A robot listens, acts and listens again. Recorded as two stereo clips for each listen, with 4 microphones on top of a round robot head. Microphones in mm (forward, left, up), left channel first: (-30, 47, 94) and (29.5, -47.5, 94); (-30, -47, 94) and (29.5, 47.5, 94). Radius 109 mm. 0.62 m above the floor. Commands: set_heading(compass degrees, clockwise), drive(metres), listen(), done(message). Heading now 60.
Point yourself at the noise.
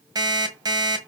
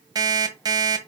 done("Found it: an alarm clock, straight ahead, 1 to 2 m away.")